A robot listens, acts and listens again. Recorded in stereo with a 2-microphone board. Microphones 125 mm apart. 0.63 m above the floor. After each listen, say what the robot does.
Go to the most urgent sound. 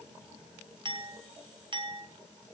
Keep listening.
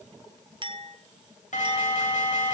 Turn 90° left.
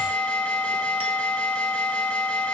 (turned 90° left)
Turn 10° left.
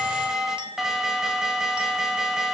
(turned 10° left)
Drive 1.0 m forward.
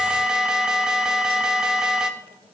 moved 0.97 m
Drive 1.0 m forward.
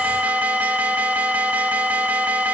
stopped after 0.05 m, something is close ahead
Turn 15° right.
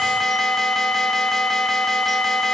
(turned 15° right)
I am next to the alarm.